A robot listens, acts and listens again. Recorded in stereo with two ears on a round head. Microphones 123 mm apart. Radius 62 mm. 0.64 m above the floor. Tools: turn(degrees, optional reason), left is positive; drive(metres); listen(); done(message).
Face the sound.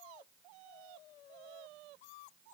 listen()
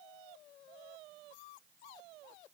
listen()
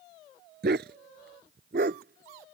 turn(degrees=-90)
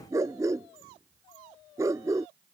turn(degrees=-25, reason="So it is at 25° right.")
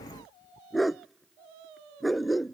done("Facing the dog barking.")